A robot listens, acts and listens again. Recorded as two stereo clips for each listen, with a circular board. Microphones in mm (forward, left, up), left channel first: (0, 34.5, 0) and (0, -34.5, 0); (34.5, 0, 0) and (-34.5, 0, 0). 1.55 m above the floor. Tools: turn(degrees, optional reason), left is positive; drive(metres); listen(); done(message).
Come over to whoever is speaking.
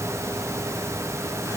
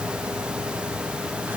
listen()
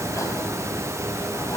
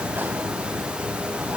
listen()
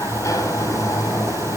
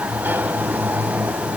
done("I can't make out anyone speaking to turn to.")